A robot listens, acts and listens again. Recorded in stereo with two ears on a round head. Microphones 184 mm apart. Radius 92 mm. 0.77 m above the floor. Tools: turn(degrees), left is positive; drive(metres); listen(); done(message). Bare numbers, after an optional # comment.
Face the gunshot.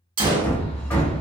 # The gunshot: about 25° right or 155° right.
turn(-25)
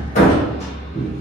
listen()
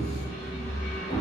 done("I heard a gunshot, but can't make it out now. It was about straight ahead or 130° right.")